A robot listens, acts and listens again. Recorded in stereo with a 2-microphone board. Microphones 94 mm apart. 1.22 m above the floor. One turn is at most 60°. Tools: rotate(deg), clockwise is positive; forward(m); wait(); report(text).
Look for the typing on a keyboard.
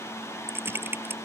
rotate(25)
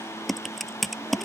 report("Facing the typing on a keyboard.")